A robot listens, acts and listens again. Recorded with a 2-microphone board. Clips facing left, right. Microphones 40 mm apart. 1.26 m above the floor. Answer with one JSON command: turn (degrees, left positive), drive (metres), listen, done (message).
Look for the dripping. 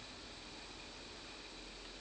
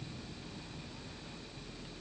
{"listen": true}
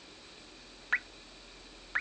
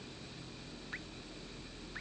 {"turn": 90}
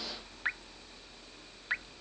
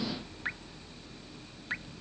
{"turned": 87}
{"turn": 10}
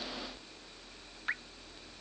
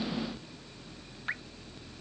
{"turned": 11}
{"done": "Facing the dripping."}